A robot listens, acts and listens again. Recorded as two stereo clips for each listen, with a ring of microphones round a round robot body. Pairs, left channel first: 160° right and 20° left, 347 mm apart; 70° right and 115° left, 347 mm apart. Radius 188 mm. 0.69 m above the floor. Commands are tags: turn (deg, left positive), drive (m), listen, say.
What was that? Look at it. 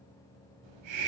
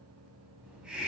<turn deg="25"/>
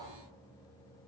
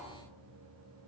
<turn deg="15"/>
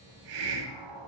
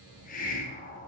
<say>Found it: a hiss, straight ahead.</say>